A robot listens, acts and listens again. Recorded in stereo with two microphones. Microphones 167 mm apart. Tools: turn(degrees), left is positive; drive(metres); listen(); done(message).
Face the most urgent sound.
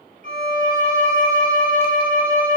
listen()
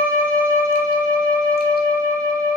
listen()
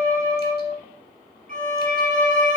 done("I can't make out anything urgent to turn to.")